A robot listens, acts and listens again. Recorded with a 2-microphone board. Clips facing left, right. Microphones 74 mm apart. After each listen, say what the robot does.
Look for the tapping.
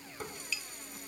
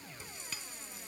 Turn 45° right.
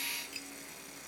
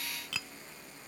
Turn 95° right.
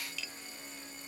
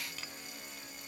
Turn 40° right.
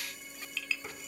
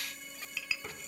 Turn 10° right.
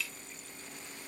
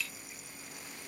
Keep listening.
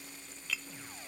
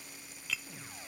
Found it: tapping, straight ahead.